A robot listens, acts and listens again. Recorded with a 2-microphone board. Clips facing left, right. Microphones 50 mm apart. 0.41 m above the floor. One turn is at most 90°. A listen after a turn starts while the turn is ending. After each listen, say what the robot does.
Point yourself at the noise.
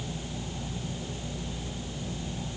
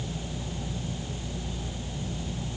Keep listening.
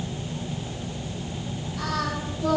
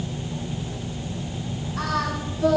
Turn 90° right.
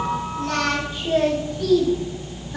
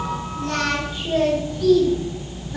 Facing the singing, over 4 m away.